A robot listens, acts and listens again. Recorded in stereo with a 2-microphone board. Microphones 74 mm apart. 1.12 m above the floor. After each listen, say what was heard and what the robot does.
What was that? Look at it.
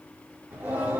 The singing: about 25° right or 155° right. Turn 25° right.
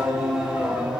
Turn 30° right.
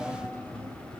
So it is at 10° left. Turn 10° left.
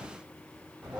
The singing is now 10° right. Turn 10° right.
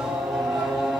The singing is now 10° right. Turn 10° right.
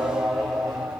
Found it: singing, straight ahead.